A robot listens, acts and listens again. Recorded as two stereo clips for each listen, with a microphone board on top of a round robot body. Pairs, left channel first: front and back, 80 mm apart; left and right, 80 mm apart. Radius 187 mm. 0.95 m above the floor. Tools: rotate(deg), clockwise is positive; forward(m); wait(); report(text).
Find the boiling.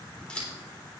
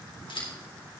wait()
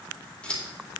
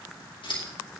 wait()
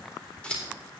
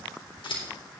report("I can't make out boiling, only scissors.")